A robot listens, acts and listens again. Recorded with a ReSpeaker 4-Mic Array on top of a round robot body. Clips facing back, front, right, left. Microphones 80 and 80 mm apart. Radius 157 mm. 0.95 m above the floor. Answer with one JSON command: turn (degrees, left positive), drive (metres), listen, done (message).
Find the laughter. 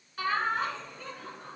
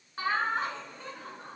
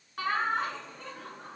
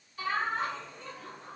{"turn": -55}
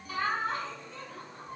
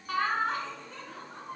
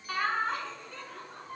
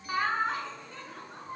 {"turn": 20}
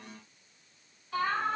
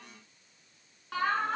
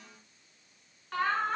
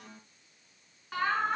{"turn": 10}
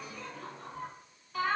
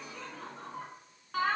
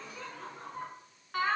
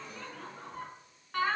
{"done": "Found it: laughter, straight ahead."}